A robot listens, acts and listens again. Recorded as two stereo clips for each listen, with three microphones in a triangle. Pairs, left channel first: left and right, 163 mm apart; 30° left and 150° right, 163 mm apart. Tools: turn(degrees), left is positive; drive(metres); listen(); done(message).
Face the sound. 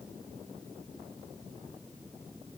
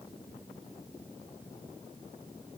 listen()
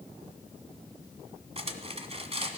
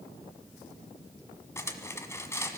turn(degrees=-40)
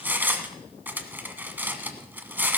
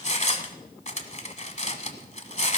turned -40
turn(degrees=-10)
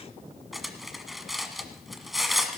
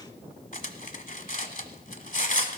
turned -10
done("Facing the cutlery clinking.")